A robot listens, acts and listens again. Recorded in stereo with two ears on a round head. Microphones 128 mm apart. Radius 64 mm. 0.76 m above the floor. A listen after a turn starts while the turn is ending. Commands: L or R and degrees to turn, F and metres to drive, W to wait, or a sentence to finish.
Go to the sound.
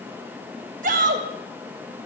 R60
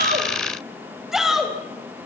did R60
F1.0
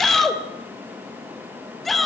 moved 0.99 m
F1.0
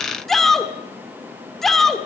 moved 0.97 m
F1.0
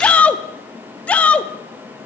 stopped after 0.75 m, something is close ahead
L10
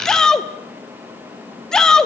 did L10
I am next to the shout.